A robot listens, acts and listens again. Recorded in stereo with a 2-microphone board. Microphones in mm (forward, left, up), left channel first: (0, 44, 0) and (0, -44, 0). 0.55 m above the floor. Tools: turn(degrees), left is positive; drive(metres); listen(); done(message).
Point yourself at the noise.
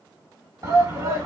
turn(degrees=-40)
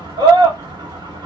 turn(degrees=-95)
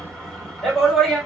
done("Facing the shout.")